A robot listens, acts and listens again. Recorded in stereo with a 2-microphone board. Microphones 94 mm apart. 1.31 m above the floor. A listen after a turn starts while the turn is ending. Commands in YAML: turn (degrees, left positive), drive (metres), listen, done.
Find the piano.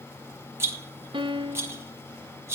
turn: -60
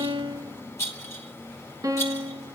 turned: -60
turn: -40
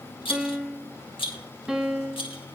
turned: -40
done: "Found it: a piano, straight ahead, under 1 m away."